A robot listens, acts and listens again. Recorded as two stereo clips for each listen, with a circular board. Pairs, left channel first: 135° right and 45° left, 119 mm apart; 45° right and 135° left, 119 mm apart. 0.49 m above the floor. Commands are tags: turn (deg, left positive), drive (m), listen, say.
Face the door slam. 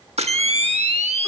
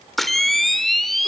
<listen/>
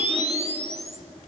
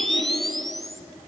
<listen/>
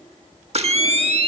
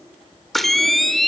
<say>I can't make out a door slam, only a camera shutter.</say>